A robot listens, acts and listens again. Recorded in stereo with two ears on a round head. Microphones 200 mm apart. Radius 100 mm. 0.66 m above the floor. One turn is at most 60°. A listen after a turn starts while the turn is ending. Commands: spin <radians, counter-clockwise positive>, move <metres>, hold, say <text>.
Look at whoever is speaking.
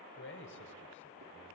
spin 0.96
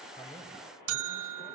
hold
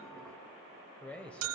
say Facing the man speaking.